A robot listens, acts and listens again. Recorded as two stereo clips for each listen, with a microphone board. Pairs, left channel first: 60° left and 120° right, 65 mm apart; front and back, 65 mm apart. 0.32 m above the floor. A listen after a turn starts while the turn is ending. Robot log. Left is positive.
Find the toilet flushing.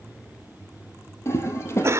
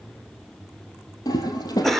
note: The toilet flushing: 15° left.
cmd yaw +15
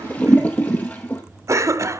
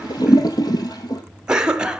end: Found it: a toilet flushing, straight ahead.